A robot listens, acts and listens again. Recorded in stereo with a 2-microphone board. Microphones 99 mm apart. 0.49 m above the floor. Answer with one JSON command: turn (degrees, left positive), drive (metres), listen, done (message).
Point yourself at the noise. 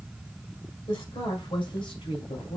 {"turn": 70}
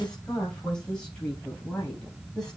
{"turn": 10}
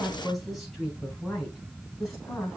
{"done": "Found it: a woman speaking, straight ahead, 2 to 4 m away."}